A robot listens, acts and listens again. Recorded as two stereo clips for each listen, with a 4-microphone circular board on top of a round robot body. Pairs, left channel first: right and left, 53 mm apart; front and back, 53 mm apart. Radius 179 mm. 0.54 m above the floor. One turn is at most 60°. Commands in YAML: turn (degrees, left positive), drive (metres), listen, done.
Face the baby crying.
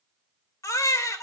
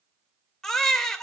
turn: -60
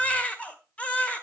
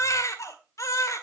turn: -25
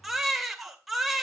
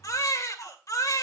done: "Found it: a baby crying, straight ahead."